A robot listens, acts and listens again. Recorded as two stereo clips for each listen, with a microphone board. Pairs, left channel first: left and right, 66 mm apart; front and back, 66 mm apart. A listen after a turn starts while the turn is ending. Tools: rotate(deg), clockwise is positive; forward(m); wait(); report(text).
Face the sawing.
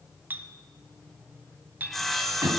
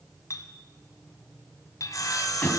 report("Found it: sawing, straight ahead, 1 to 2 m away.")